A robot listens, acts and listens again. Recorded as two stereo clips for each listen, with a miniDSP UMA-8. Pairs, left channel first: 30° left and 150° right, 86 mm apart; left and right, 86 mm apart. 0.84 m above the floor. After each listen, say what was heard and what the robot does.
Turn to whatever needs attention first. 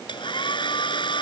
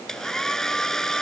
Keep listening.
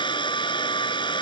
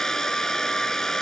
Keep listening.
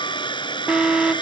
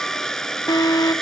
The alarm: 130° left. Turn 130° left.
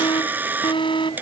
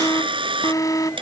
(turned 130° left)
The alarm is now 45° left. Turn 45° left.
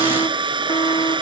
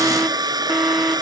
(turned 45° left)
Facing the alarm.